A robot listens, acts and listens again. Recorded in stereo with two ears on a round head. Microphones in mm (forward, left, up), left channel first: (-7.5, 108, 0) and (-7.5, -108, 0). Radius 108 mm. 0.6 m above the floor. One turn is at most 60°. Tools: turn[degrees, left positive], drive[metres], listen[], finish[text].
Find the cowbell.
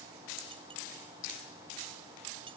Action: listen[]
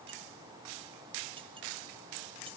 Action: listen[]
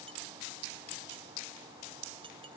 Action: finish[I can't make out a cowbell to turn to.]